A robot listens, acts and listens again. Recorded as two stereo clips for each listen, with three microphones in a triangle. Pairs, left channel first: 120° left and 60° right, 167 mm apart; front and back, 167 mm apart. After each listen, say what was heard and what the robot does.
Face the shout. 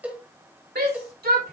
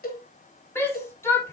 The shout: 75° right. Turn 75° right.
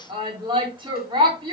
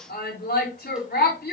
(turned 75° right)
Found it: a shout, straight ahead.